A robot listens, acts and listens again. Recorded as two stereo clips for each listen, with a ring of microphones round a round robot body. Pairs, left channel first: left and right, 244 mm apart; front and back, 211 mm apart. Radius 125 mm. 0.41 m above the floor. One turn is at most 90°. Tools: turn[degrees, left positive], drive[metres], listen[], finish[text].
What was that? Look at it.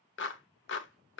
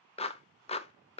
Thought: The clap: 60° left.
Action: turn[60]
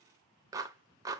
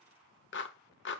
Thought: The clap is now 15° right.
Action: turn[-15]
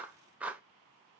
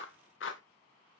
Action: finish[Found it: a clap, straight ahead, under 1 m away.]